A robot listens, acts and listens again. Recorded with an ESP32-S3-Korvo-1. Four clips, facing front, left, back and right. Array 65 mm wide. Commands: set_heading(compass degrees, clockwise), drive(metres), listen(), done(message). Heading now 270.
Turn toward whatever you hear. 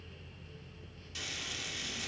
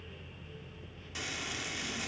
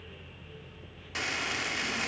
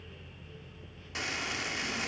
set_heading(65)
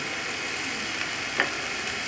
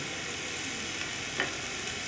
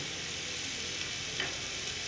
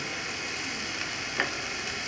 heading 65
set_heading(85)
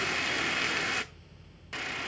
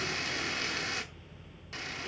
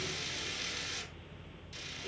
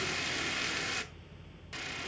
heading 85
done("Facing the frying, 1 to 2 m away.")